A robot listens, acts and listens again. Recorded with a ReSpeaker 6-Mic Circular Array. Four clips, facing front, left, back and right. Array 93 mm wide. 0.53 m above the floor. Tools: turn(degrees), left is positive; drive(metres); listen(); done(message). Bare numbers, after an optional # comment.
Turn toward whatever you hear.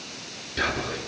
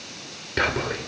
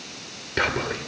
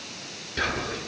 # The whispering: 140° left.
turn(140)
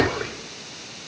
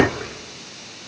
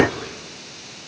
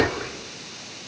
done("Facing the whispering.")